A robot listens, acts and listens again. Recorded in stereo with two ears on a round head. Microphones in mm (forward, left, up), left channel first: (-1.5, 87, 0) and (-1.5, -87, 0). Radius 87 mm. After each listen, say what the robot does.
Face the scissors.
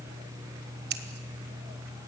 Turn 55° right.
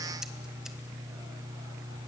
Keep listening.
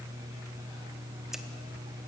Keep listening.
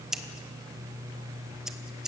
Found it: scissors, straight ahead, 1 to 2 m away.